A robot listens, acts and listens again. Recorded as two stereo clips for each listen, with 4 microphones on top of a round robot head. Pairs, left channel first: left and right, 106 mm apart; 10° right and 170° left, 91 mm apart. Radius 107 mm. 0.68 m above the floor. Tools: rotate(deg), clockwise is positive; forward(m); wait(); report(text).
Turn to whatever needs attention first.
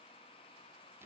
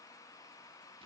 wait()
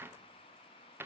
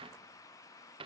wait()
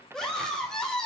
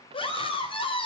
report("Found it: a scream, straight ahead, 2 to 4 m away.")